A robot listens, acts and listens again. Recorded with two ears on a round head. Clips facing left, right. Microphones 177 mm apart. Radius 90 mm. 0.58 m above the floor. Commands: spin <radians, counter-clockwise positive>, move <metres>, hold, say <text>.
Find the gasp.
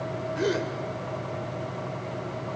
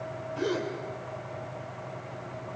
spin 0.35
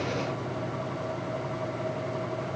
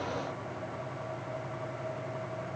hold
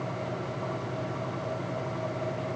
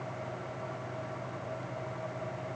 say I heard a gasp, but can't make it out now. It was about straight ahead or 140° left.